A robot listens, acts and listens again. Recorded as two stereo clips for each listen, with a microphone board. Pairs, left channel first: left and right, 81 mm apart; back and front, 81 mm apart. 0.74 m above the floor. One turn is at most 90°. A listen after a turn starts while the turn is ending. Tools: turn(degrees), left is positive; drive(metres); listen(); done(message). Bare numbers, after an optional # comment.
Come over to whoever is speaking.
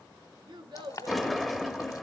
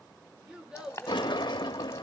# The child speaking: 80° right.
turn(-80)
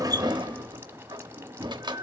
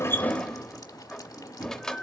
listen()
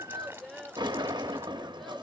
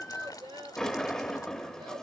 drive(1.0)
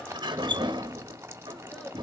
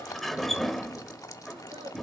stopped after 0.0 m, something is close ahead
listen()
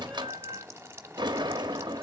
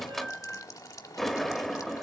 listen()
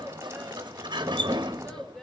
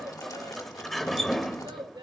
# The child speaking is now 10° left.
turn(10)
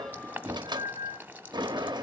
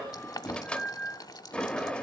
listen()
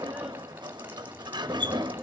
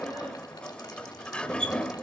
listen()
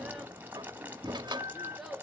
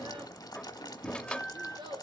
done("Something is in my way. I am facing the child speaking but have not reached it.")